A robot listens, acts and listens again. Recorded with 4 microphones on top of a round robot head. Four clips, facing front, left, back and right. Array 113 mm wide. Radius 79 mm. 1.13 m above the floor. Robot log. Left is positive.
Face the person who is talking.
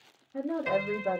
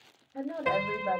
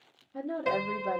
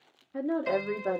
note: The woman speaking: 80° right.
cmd yaw -80
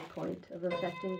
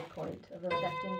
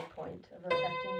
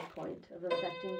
note: The woman speaking is now 15° right.
cmd yaw -15
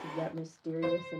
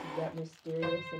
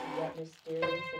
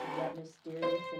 end: Facing the woman speaking, 1 to 2 m away.